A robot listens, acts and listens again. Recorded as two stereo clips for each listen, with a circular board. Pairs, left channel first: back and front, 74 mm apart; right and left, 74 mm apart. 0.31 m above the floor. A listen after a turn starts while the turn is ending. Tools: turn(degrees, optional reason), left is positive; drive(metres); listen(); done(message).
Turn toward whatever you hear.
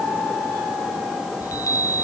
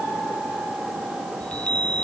turn(degrees=-160, reason="The chime: 160° right.")
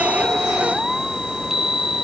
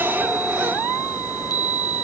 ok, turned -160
turn(degrees=-80, reason="The chime is now 80° right.")
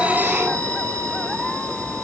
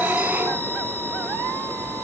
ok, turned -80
listen()
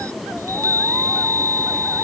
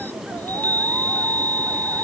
turn(degrees=-30, reason="The chime is now 30° right.")
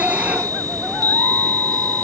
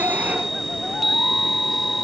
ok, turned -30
done("Found it: a chime, straight ahead.")